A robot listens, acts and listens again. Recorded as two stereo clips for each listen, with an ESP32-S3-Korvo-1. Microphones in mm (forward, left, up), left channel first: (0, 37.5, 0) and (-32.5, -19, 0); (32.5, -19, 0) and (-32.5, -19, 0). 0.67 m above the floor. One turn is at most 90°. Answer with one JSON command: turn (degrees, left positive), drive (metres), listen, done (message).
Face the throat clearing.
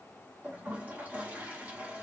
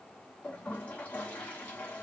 {"listen": true}
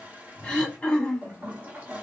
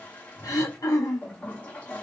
{"turn": -10}
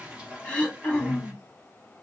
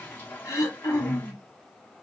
{"done": "Found it: throat clearing, straight ahead."}